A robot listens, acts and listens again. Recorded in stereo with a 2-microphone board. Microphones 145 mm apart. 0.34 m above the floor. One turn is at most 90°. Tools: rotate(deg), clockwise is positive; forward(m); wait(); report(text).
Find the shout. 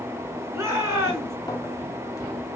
rotate(20)
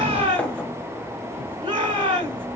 rotate(90)
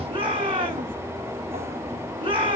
rotate(40)
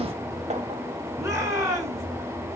rotate(20)
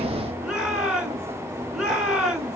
report("Facing the shout.")